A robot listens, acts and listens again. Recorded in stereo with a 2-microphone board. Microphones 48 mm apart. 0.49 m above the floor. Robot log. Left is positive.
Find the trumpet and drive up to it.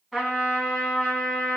cmd yaw +30
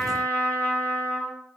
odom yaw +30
note: So it is at 150° left.
cmd yaw +150
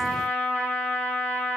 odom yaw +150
note: The trumpet is now 55° left.
cmd yaw +55
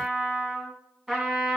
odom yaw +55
cmd fwd 1.0
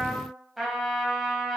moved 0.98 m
cmd fwd 1.0
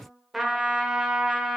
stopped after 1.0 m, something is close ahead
end: Arrived at the trumpet, straight ahead.